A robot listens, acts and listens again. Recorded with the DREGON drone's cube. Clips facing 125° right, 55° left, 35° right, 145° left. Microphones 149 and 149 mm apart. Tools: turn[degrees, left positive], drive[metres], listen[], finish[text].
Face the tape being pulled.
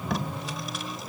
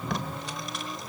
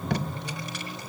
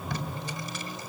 Thought: The tape being pulled: 35° right.
Action: turn[-35]
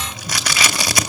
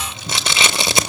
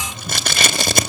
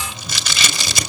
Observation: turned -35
Action: finish[Facing the tape being pulled, 1 to 2 m away.]